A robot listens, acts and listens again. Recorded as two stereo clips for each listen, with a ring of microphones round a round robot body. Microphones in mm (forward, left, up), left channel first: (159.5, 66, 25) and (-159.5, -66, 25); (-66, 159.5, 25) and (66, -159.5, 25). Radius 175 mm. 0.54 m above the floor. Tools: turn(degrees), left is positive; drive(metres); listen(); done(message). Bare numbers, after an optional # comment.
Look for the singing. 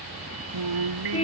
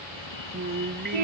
# The singing: 130° right.
turn(-130)
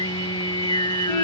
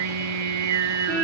# The singing is now 55° right.
turn(-55)
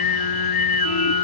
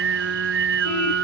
# The singing is now 10° right.
turn(-10)
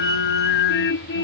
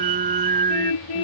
done("Found it: singing, straight ahead.")